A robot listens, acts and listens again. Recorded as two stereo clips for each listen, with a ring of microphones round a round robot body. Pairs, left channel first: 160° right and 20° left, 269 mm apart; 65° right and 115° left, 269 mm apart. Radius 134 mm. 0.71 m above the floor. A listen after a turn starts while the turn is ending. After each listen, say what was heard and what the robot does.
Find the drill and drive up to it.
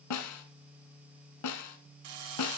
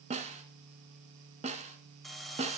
The drill: 20° left. Turn 20° left.
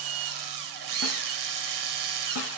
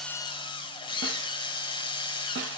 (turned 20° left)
Drive 1.0 m forward.
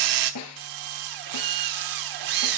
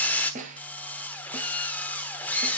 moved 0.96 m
The drill is now 15° left. Turn 15° left.
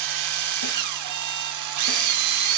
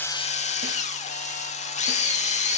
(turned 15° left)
Drive 1.0 m forward.
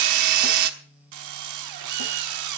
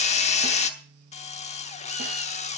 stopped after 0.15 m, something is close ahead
Arrived at the drill, straight ahead.